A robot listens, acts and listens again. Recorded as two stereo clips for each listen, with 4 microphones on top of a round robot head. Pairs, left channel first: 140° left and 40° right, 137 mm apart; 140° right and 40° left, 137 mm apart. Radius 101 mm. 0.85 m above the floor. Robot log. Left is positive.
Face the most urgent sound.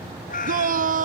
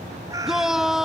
note: The shout: 45° right.
cmd yaw -45
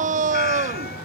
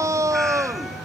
note: The shout is now 25° right.
cmd yaw -25
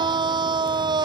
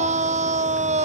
note: The shout is now 15° left.
cmd yaw +15
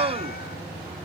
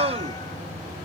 end: Facing the shout.